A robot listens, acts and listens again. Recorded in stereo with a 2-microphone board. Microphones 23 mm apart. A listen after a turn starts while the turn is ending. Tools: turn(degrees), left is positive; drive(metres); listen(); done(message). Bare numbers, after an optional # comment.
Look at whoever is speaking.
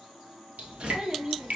# The child speaking: about 35° right or 145° right.
turn(-35)
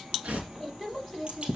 done("Facing the child speaking, 2 to 4 m away.")